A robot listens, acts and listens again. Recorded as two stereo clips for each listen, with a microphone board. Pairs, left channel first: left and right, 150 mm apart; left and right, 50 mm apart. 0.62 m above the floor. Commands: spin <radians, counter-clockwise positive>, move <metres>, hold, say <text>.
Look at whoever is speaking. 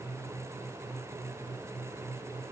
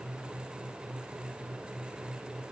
hold
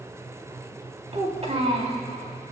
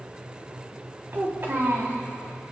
spin -0.87
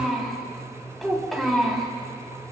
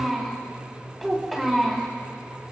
say Found it: a child speaking, straight ahead.